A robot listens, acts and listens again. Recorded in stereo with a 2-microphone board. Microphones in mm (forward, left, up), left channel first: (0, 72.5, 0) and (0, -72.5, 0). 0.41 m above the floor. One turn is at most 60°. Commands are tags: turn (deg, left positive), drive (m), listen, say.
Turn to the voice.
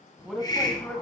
<turn deg="30"/>
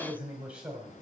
<say>Found it: a man speaking, straight ahead, 1 to 2 m away.</say>